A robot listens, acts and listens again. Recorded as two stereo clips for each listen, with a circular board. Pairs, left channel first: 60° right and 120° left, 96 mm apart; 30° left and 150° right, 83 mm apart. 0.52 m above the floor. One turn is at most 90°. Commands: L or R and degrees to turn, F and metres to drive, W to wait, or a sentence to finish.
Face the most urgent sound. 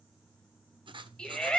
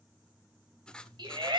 R90
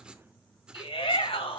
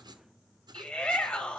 R50
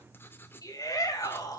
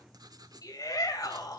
R10
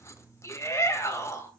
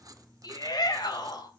Found it: a shout, straight ahead.